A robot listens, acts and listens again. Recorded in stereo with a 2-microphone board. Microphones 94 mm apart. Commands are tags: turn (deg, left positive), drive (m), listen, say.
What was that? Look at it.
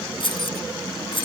<turn deg="60"/>
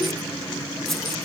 <listen/>
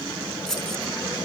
<say>Found it: keys jangling, straight ahead.</say>